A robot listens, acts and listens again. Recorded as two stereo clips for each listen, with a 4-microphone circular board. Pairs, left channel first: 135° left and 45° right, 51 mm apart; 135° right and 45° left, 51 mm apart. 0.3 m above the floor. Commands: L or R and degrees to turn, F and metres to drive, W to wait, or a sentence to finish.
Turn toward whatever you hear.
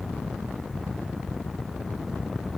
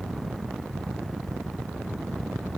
W
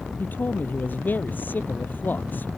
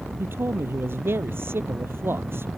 L85
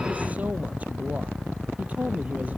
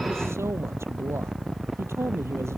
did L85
L15
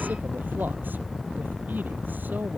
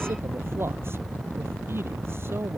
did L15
W
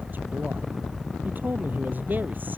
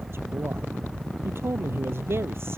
L10
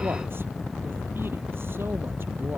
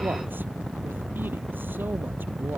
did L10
W
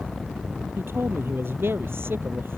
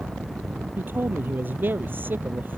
Found it: a man speaking, straight ahead.